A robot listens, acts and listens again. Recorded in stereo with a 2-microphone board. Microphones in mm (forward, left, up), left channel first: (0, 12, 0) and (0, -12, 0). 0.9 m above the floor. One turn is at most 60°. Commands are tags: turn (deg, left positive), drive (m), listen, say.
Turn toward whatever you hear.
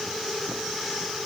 <listen/>
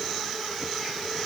<listen/>
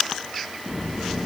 <turn deg="-30"/>
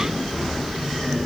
<say>Found it: a sliding door, straight ahead, 2 to 4 m away.</say>